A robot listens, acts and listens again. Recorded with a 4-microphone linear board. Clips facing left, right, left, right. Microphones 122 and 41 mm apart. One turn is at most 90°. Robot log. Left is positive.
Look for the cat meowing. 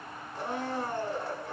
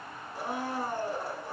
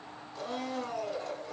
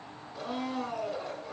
cmd idle
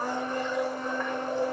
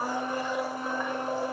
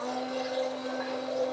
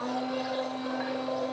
cmd idle
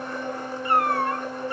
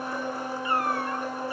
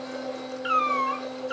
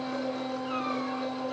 note: The cat meowing: about 60° left or 120° left.
cmd yaw +60
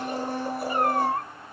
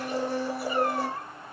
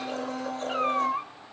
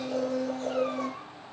note: So it is at 55° left.
cmd yaw +55
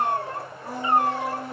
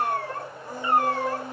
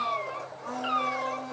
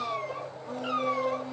note: The cat meowing is now 25° left.
cmd yaw +25
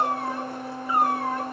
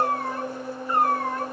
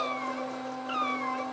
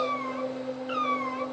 end: Facing the cat meowing, 2 to 4 m away.